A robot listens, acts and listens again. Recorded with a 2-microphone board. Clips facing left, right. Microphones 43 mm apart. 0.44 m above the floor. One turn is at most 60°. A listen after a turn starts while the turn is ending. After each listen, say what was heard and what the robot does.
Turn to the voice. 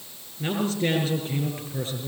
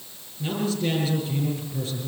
The man speaking: about 35° left or 145° left. Turn 35° left.
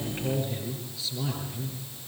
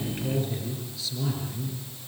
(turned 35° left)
Found it: a man speaking, straight ahead, over 4 m away.